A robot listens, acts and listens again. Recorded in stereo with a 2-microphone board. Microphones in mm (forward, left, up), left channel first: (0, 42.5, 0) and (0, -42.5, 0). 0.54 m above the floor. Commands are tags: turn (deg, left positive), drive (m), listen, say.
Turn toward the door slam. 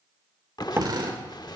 <turn deg="-30"/>
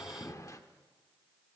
<listen/>
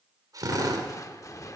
<say>I heard a door slam, but can't make it out now. It was about straight ahead or 120° right.</say>